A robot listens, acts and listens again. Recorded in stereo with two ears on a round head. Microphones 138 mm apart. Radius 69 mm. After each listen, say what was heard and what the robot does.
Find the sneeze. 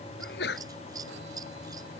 Turn 90° left.
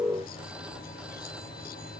Facing where the sneeze came from. I can't hear it now.